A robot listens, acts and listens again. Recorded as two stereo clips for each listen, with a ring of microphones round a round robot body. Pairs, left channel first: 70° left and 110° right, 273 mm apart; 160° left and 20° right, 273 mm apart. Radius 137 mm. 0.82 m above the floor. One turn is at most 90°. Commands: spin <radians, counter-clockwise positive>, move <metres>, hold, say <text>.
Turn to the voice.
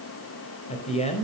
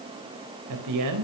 say Facing the man speaking, 2 to 4 m away.